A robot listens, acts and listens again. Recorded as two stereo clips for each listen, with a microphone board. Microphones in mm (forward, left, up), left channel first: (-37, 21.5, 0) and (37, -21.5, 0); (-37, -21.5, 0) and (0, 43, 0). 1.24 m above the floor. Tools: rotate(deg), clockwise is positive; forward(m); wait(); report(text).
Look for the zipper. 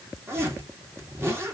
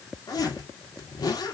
rotate(90)
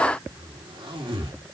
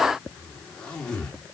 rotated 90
rotate(45)
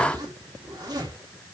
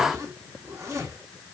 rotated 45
rotate(-10)
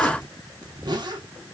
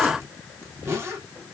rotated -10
report("Found it: a zipper, straight ahead, 2 to 4 m away.")